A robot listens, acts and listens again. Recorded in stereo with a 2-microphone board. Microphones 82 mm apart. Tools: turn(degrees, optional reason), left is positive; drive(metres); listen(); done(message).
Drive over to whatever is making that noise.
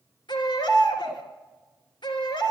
turn(degrees=90)
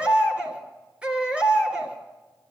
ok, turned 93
turn(degrees=-15, reason="So it is at 15° right.")
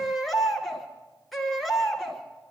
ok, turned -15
drive(metres=1.0)
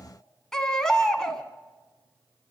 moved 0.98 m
drive(metres=1.0)
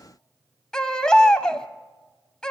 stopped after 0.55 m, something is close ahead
turn(degrees=10, reason="The baby crying is now 10° left.")
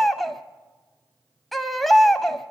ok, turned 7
done("I am next to the baby crying.")